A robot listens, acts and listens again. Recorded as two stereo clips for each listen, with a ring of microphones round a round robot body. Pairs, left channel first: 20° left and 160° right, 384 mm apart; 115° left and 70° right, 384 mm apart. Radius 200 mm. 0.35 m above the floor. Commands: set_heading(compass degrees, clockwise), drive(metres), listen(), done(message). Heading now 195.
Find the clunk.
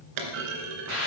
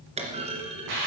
set_heading(340)
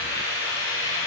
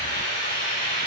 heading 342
done("I heard a clunk from this way, but can't make it out now.")